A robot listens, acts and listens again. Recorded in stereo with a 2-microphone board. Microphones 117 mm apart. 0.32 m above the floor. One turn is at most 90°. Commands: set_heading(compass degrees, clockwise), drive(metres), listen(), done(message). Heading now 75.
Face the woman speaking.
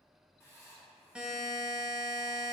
listen()
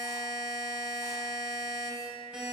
listen()
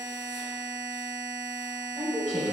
set_heading(0)
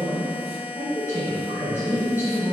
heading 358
set_heading(333)
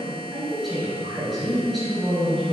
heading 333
done("Found it: a woman speaking, straight ahead.")